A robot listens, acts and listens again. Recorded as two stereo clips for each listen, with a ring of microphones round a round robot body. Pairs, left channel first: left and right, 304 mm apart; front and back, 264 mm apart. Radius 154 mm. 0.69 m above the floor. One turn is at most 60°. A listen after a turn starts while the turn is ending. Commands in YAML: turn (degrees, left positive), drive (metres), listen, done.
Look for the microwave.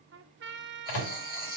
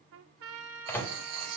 turn: 60
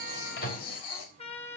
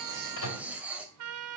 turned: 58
turn: 25
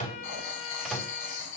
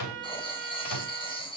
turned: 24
listen: true
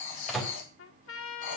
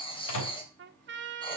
done: "Found it: a microwave, straight ahead, 2 to 4 m away."